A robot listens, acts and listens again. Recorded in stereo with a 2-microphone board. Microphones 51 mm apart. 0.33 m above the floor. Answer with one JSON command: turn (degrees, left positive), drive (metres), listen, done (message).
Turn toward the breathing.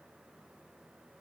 {"listen": true}
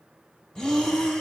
{"turn": 15}
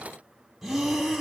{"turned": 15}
{"done": "Facing the breathing."}